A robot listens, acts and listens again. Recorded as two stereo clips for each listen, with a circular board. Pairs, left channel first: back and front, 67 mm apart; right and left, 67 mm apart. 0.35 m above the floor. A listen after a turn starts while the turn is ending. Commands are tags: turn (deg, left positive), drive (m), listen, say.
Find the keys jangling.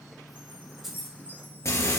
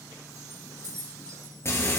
<turn deg="85"/>
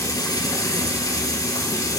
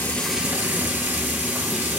<listen/>
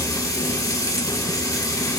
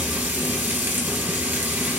<listen/>
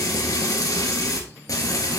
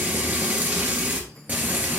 <say>I heard keys jangling from this way, but can't make it out now.</say>